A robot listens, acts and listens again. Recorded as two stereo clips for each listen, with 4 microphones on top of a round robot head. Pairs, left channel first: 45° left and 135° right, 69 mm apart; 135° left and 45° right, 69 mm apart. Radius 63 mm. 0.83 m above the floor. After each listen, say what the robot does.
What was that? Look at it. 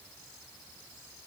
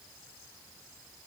Keep listening.
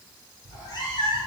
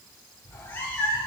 Turn 65° left.
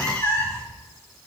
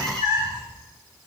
Turn 10° right.
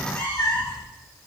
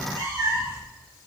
Found it: a cat meowing, straight ahead, 2 to 4 m away.